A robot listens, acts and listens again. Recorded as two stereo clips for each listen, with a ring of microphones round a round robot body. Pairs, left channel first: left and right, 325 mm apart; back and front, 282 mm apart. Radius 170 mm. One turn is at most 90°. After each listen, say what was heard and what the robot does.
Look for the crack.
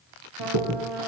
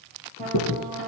The crack: 125° right. Turn 90° right.
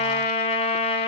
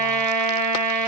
Nothing new. It was at 35° right. Turn 35° right.
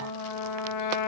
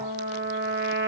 I heard a crack from this way, but can't make it out now.